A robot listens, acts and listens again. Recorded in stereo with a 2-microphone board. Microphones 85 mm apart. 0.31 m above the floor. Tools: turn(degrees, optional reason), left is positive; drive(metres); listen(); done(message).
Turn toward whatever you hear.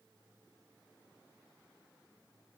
listen()
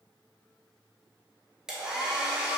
turn(degrees=-30)
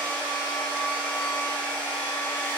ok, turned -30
turn(degrees=20, reason="So it is at 20° left.")
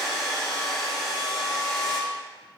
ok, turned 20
done("Facing the hair dryer, under 1 m away.")